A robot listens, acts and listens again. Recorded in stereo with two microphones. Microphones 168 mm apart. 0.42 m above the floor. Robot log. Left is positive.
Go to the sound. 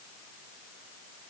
cmd idle
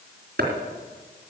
cmd yaw -90
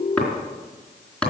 cmd fwd 1.0
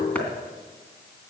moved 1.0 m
note: The chopping is now 10° left.
cmd yaw +10
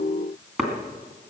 cmd fwd 1.0
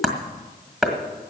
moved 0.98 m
cmd fwd 1.0
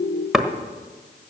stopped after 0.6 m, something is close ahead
end: I am next to the chopping.